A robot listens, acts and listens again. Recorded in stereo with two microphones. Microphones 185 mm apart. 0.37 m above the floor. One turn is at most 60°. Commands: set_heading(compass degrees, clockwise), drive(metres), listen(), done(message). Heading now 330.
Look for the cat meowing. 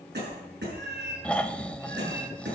set_heading(30)
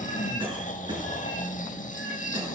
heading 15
listen()
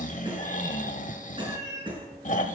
set_heading(60)
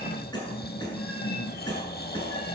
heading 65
listen()
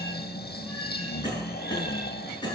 listen()
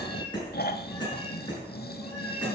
set_heading(55)
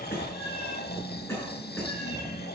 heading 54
listen()
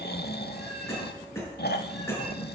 listen()
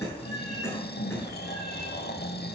done("Facing where the cat meowing came from. I can't hear it now.")